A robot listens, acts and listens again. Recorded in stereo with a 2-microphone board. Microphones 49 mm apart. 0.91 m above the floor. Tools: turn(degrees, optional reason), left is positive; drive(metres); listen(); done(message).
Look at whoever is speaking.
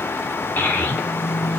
turn(degrees=40, reason="The child speaking: about 40° left or 140° left.")
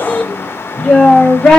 turn(degrees=10, reason="So it is at 10° left.")
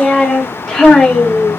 done("Facing the child speaking.")